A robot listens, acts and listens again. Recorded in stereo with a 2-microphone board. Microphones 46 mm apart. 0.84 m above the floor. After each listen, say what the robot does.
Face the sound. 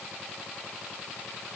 Keep listening.
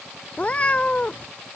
Turn 30° left.
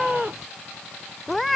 Facing the cat meowing.